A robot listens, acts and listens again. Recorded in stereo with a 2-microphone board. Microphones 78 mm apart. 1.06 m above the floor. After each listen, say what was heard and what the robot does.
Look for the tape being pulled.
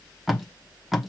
Turn 30° right.
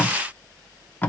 So it is at 30° left. Turn 30° left.
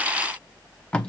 The tape being pulled is now 15° left. Turn 15° left.
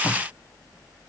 Facing the tape being pulled, under 1 m away.